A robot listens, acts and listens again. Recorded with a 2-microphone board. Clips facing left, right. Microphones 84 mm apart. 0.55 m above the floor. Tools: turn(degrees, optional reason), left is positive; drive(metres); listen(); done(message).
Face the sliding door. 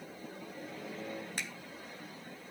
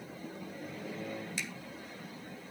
listen()
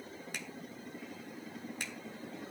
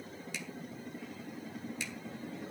listen()
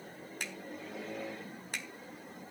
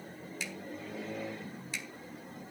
done("I can't make out a sliding door to turn to.")